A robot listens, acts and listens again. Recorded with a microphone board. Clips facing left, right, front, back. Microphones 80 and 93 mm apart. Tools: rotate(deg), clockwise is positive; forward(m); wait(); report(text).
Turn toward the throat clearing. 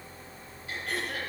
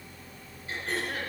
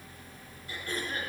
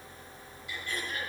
rotate(45)
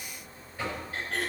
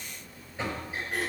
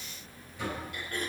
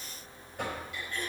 rotate(15)
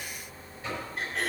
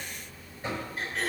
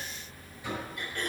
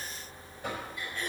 report("Facing the throat clearing.")